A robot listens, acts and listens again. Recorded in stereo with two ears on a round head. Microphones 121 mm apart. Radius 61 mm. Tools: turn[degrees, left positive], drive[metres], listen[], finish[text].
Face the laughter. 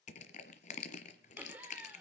Action: turn[-30]
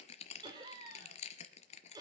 Thought: So it is at 150° right.
Action: turn[-150]
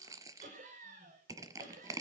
Thought: The laughter is now 60° right.
Action: turn[-60]
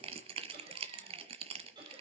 Thought: The laughter is now 35° right.
Action: turn[-35]
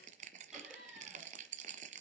Action: finish[Facing the laughter, over 4 m away.]